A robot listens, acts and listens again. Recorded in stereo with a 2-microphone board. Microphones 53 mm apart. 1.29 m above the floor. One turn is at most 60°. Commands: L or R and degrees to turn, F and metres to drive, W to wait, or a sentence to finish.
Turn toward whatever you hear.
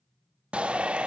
R20
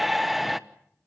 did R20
Facing the shout, 1 to 2 m away.